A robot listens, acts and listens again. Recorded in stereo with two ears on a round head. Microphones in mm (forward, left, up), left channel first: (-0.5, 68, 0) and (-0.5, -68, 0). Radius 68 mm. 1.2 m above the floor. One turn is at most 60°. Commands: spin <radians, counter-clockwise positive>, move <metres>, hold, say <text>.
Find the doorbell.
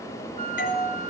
spin 1.05
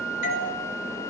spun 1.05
spin 1.05
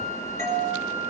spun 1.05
spin 0.35
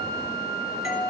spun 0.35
say Found it: a doorbell, straight ahead, over 4 m away.